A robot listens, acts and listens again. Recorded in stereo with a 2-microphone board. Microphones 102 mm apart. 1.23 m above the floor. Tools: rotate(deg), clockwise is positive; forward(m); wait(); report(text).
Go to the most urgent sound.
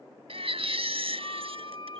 rotate(90)
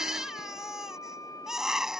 forward(1.0)
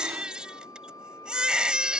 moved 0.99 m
rotate(10)
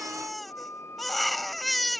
forward(1.0)
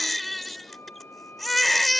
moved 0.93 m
forward(1.0)
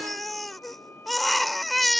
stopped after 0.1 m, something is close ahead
report("Arrived at the baby crying, straight ahead.")